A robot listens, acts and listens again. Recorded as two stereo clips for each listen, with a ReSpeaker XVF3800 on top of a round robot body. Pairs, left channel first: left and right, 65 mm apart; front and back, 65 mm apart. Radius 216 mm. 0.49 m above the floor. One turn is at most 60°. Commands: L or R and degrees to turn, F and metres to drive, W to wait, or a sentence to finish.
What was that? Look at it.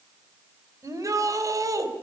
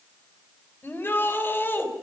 R55
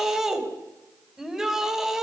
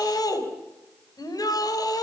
R10
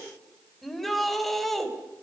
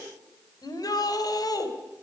Found it: a shout, straight ahead, over 4 m away.